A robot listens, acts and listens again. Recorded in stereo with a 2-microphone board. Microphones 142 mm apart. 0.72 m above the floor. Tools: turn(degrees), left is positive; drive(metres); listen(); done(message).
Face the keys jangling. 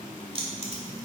turn(degrees=-45)
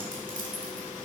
turn(degrees=-65)
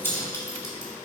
turn(degrees=20)
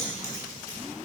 turn(degrees=20)
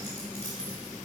turn(degrees=20)
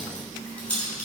turn(degrees=10)
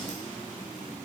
listen()
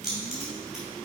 done("Found it: keys jangling, straight ahead.")